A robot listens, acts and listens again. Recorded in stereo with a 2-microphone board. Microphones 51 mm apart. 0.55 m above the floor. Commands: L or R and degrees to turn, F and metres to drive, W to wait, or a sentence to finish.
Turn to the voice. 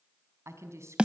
R70
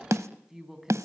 Found it: a woman speaking, straight ahead, over 4 m away.